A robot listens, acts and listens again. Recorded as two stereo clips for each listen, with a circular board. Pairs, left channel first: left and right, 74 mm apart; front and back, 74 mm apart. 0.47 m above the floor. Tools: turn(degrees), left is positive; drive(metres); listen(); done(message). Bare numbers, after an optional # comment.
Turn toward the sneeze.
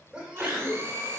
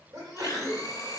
# The sneeze: 160° right.
turn(-160)
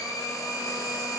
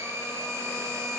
done("I heard a sneeze from this way, but can't make it out now.")